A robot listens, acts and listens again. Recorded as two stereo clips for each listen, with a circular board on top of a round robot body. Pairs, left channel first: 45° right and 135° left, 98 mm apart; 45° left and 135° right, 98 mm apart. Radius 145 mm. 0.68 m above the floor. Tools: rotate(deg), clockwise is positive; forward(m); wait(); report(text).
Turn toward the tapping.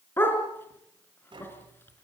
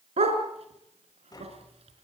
rotate(-95)
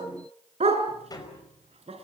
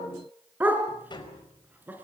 report("Found it: tapping, straight ahead.")